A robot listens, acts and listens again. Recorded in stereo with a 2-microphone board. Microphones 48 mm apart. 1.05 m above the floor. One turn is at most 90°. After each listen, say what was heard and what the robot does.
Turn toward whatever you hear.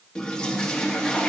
The toilet flushing: about 15° left or 165° left. Turn 15° left.
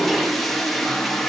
Found it: a toilet flushing, straight ahead.